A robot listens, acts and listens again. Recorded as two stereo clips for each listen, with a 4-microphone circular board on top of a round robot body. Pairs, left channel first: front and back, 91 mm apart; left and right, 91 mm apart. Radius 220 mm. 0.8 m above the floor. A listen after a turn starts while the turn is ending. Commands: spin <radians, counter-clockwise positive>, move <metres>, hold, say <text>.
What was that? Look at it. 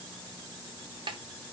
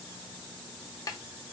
spin 2.53
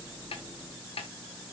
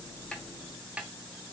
spin -0.17
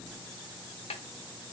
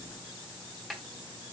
say Found it: a snare drum, straight ahead.